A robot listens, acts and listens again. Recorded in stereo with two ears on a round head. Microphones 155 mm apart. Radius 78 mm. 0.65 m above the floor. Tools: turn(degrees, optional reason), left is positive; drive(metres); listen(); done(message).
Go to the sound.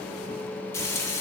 turn(degrees=30)
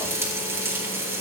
turn(degrees=-15, reason="So it is at 15° right.")
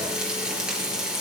drive(metres=1.0)
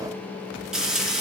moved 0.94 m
drive(metres=1.0)
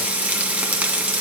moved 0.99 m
turn(degrees=-10, reason="The frying is now 10° right.")
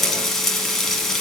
drive(metres=1.0)
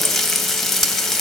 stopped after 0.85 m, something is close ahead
done("I am next to the frying.")